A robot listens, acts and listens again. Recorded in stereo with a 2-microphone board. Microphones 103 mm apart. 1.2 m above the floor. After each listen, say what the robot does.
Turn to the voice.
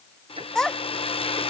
Turn 30° left.
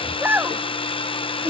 Turn 20° right.
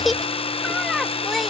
Found it: a child speaking, straight ahead.